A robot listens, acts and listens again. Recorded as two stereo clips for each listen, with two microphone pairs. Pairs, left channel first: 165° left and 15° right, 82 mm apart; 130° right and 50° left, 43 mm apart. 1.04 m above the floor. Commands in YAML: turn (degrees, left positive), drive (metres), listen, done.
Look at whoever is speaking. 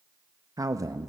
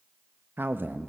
turn: 25
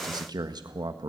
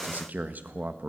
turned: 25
turn: 10
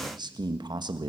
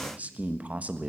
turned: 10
done: "Found it: a man speaking, straight ahead, 1 to 2 m away."